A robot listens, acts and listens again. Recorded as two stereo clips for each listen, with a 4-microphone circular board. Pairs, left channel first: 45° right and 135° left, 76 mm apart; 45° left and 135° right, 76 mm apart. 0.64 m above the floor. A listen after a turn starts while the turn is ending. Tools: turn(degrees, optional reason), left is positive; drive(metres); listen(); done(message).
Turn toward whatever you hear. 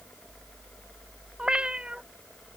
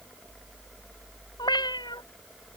turn(degrees=55, reason="The cat meowing: 55° left.")
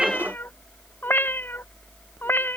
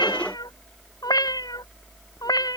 turn(degrees=15, reason="The cat meowing is now 15° left.")
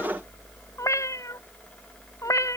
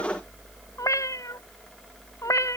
done("Facing the cat meowing.")